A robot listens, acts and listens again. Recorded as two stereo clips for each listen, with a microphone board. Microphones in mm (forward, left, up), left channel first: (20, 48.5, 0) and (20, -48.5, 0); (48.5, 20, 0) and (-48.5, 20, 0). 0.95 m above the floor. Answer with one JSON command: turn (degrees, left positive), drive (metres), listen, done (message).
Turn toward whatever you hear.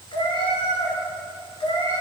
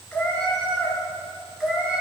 {"turn": 100}
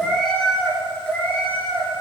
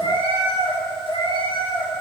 {"turn": 20}
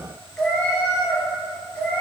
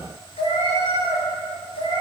{"turn": 15}
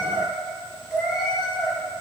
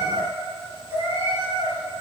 {"done": "Facing the cat meowing, 2 to 4 m away."}